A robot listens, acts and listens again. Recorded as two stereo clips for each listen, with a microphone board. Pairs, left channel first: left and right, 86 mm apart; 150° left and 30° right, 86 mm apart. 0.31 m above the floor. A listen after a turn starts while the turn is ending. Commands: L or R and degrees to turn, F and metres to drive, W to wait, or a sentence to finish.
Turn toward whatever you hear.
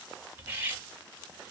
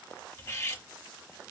R150
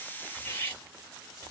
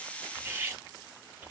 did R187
L35
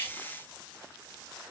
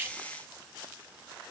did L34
W
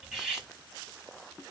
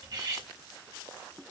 Facing the cutlery clinking.